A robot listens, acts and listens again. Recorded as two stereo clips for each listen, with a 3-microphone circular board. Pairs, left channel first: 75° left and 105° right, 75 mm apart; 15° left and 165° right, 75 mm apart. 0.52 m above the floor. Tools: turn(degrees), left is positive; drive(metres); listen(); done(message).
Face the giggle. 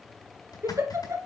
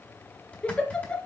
turn(degrees=-60)
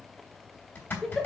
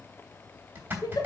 turn(degrees=-15)
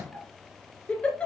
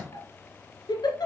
done("Found it: a giggle, straight ahead, 1 to 2 m away.")